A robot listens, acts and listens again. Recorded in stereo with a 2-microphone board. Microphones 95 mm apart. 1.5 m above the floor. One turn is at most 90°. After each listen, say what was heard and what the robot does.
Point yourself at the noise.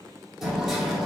Turn 30° left.
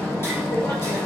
So it is at 150° left. Turn 90° left.
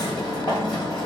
The hammering is now 100° left. Turn 90° left.
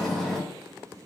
Found it: hammering, straight ahead, 2 to 4 m away.